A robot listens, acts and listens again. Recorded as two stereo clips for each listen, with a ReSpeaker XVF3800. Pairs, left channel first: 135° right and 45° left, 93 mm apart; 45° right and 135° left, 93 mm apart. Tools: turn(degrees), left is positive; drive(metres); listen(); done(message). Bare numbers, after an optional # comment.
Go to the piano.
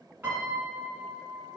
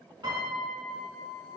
# The piano: 110° left.
turn(110)
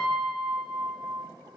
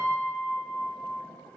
# The piano is now 15° left.
turn(15)
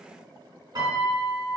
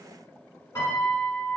# The piano is now 10° left.
turn(10)
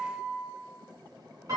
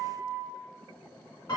drive(1.0)
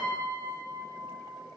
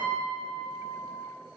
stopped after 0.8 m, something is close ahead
done("I am next to the piano.")